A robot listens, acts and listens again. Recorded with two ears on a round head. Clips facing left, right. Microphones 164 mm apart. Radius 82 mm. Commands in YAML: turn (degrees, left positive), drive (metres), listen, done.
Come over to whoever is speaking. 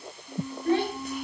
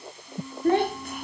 turn: -45
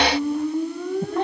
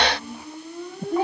drive: 1.0
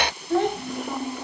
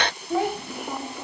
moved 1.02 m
drive: 1.0
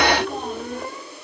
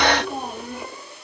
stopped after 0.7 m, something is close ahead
turn: -10
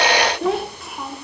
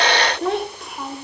done: "Arrived at the child speaking, straight ahead."